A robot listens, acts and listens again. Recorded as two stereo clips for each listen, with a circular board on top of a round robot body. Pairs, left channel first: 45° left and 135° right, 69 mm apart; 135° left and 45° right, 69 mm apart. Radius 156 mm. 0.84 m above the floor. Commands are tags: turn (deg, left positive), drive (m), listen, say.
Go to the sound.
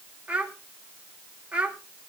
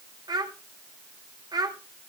<turn deg="-60"/>
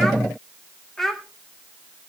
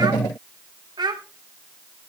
<turn deg="-40"/>
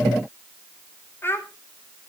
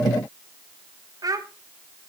<turn deg="-15"/>
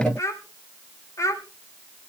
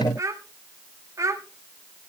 <drive m="1.0"/>
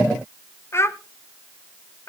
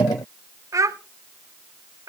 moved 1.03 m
<drive m="1.0"/>
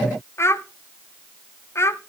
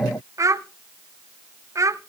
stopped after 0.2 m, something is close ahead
<say>I am next to the child speaking.</say>